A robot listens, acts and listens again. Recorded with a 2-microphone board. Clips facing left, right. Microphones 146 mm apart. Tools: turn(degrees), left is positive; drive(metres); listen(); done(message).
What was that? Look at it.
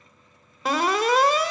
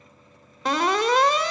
turn(degrees=30)
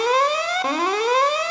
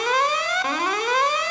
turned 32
turn(degrees=145)
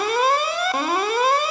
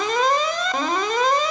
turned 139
done("Found it: an alarm, straight ahead, 1 to 2 m away.")